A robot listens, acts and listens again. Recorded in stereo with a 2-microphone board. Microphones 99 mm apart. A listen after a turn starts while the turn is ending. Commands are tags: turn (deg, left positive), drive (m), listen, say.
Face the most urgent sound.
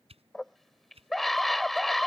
<turn deg="30"/>
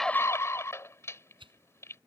<turn deg="150"/>
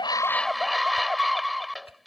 <say>Facing the scream.</say>